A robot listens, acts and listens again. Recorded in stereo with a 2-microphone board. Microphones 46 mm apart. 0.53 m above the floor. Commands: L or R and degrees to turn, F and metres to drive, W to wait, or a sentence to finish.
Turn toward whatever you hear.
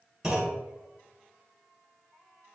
R15
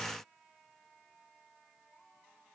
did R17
W
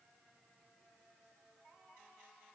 I heard a clunk, but can't make it out now. It was about straight ahead or 150° right.